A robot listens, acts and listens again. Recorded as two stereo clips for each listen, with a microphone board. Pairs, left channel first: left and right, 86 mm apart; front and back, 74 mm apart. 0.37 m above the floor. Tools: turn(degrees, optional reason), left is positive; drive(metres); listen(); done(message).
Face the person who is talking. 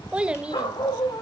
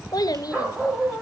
turn(degrees=-15, reason="The child speaking: 15° right.")
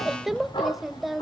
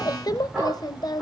done("Found it: a child speaking, straight ahead, under 1 m away.")